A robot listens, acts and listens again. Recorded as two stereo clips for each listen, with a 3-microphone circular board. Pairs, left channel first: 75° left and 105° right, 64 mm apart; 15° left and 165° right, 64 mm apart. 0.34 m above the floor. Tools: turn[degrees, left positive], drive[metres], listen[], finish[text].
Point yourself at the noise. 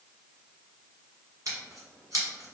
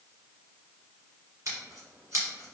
Thought: The scissors: 130° right.
Action: turn[-130]
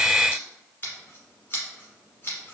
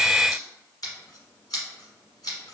Thought: The scissors is now 20° left.
Action: turn[20]
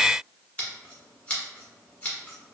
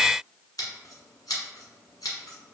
Action: finish[Facing the scissors, 1 to 2 m away.]